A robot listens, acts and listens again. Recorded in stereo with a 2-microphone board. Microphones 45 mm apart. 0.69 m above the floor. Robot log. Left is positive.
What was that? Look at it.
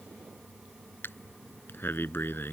note: The breathing: about 55° left or 125° left.
cmd yaw +55
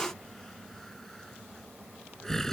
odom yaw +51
note: So it is at 10° left.
cmd yaw +10
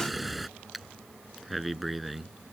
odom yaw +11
end: Found it: breathing, straight ahead.